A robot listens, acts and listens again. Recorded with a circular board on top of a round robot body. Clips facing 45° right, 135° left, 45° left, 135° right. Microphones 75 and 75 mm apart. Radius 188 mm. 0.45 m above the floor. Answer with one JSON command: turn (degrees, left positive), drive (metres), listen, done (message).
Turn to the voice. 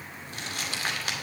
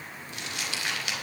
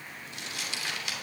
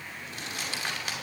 {"listen": true}
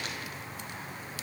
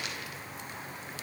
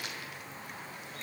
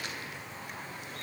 {"listen": true}
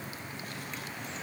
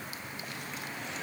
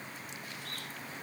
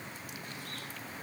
{"done": "I can't make out anyone speaking to turn to."}